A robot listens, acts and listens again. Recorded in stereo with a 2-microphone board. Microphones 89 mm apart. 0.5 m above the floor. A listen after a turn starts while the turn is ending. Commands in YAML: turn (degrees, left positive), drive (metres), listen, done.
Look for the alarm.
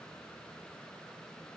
listen: true
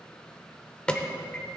turn: 30
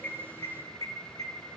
turn: 135
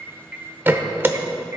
turn: -25
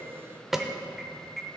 done: "Found it: an alarm, straight ahead, under 1 m away."